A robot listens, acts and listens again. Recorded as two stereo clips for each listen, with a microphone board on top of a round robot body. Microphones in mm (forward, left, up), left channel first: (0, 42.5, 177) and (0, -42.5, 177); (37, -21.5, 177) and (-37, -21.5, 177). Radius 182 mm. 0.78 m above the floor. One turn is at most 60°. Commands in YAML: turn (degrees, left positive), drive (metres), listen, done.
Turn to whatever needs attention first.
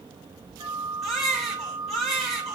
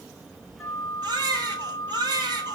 turn: 60
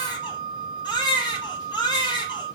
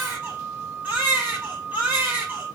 turn: 60
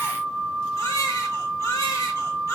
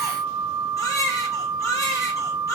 turn: 40
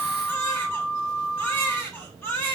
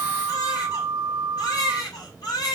turn: 25
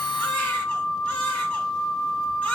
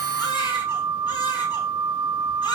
listen: true
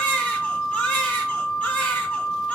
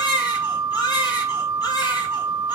turn: 15
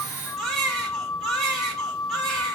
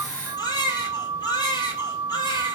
done: "Found it: a baby crying, straight ahead, 2 to 4 m away."